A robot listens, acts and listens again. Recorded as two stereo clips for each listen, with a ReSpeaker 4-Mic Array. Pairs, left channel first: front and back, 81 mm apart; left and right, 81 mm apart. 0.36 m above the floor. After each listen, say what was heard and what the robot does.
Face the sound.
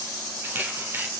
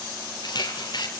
The camera shutter: 115° left. Turn 115° left.
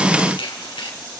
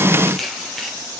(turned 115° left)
Facing the camera shutter.